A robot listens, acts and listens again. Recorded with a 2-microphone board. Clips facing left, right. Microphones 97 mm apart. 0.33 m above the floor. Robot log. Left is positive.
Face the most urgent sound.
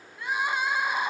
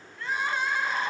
cmd yaw +30
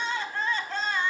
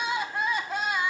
note: So it is at 10° right.
cmd yaw -10
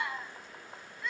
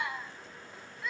end: Found it: crying, straight ahead.